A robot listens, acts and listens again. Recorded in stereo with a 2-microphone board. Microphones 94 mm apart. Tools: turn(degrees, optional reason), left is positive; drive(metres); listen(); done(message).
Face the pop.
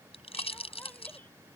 turn(degrees=90)
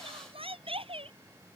done("I heard a pop from this way, but can't make it out now.")